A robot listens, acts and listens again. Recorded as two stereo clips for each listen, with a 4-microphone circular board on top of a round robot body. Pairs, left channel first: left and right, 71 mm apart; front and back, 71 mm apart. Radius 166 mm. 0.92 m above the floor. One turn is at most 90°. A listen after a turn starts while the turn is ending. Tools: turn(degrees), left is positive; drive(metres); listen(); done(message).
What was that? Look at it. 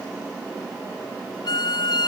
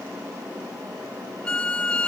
turn(degrees=75)
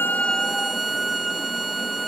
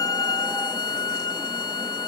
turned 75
done("Found it: a violin, straight ahead.")